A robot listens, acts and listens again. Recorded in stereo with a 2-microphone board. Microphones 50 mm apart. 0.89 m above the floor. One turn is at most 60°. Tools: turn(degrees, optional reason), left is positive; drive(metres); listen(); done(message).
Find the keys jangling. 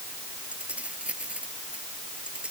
turn(degrees=-20, reason="The keys jangling: about 20° right or 160° right.")
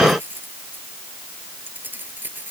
turn(degrees=-35, reason="The keys jangling: about 35° right or 145° right.")
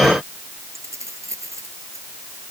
turn(degrees=-60, reason="So it is at 115° right.")
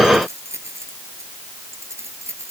turn(degrees=-60, reason="The keys jangling is now 60° right.")
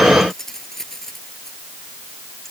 turn(degrees=10, reason="The keys jangling is now 10° left.")
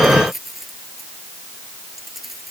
done("Facing the keys jangling.")